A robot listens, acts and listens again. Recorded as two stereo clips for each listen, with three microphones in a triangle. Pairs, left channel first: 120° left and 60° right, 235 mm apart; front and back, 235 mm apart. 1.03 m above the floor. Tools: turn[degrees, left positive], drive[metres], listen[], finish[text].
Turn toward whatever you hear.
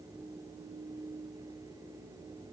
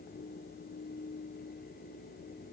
Action: listen[]
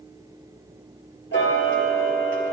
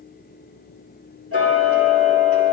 Thought: The ticking: 160° left.
Action: turn[160]
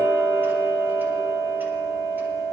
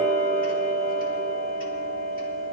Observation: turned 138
Thought: The ticking is now 25° left.
Action: turn[25]
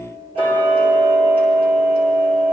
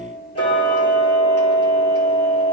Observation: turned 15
Action: finish[Facing the ticking.]